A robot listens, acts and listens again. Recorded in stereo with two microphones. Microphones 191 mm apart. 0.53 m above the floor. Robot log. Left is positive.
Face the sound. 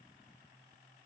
cmd idle
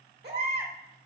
note: The baby crying: about 65° right or 115° right.
cmd yaw -65
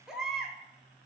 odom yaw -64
end: Found it: a baby crying, straight ahead, under 1 m away.